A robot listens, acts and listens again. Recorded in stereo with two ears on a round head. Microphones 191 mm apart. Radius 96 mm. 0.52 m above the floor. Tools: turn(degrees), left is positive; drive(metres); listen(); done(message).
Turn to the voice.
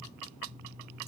listen()
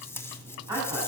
turn(degrees=-15)
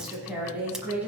turn(degrees=-30)
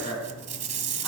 turn(degrees=20)
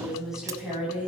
done("Found it: a woman speaking, straight ahead.")